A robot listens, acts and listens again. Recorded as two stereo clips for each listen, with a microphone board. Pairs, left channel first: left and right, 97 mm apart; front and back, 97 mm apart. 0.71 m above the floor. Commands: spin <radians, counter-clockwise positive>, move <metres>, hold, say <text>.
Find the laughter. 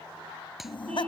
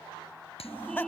spin 1.22
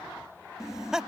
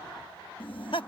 say Facing the laughter.